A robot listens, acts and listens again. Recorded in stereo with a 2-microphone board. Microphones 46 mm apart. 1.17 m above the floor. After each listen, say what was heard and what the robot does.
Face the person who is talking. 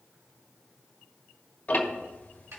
Keep listening.
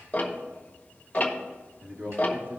The man speaking: about 55° right or 125° right. Turn 55° right.
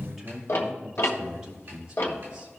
So it is at 20° right. Turn 20° right.
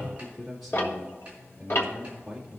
Facing the man speaking, 2 to 4 m away.